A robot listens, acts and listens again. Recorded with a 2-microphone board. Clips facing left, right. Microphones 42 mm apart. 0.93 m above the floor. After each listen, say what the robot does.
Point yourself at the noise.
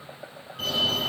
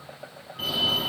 Turn 30° right.
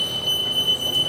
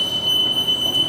Turn 140° right.
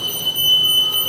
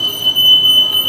Turn 45° right.
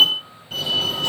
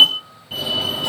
Turn 10° right.
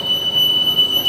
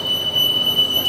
Facing the fire alarm, 2 to 4 m away.